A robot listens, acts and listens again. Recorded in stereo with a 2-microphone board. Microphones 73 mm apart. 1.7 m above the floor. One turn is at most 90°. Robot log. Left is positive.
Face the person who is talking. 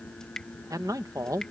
note: The man speaking: about 55° right or 125° right.
cmd yaw -55
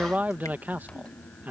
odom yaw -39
note: So it is at 25° right.
cmd yaw -25
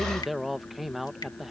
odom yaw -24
end: Found it: a man speaking, straight ahead.